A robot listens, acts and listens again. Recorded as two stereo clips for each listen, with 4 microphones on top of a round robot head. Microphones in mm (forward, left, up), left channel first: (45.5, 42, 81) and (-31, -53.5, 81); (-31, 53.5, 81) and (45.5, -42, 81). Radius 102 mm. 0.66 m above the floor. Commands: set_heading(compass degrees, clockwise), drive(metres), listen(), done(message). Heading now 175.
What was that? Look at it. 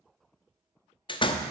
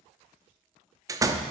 set_heading(165)
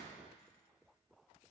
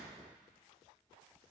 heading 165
done("I heard a door slam from this way, but can't make it out now.")